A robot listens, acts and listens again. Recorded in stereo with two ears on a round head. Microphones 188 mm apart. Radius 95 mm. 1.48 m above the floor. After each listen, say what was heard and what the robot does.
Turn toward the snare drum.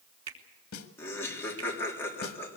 The snare drum: about 70° left or 110° left. Turn 70° left.
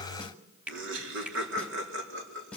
Found it: a snare drum, straight ahead, 2 to 4 m away.